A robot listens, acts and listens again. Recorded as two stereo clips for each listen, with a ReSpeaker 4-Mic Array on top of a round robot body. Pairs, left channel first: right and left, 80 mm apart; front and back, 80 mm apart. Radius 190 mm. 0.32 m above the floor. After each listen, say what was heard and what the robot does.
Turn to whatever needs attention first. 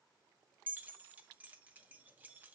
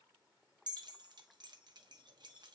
Keep listening.
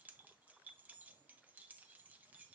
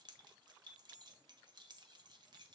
Keep listening.
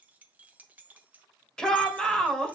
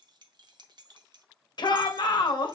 The shout: 10° right. Turn 10° right.
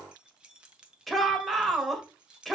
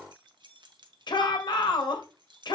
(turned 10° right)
Found it: a shout, straight ahead, 2 to 4 m away.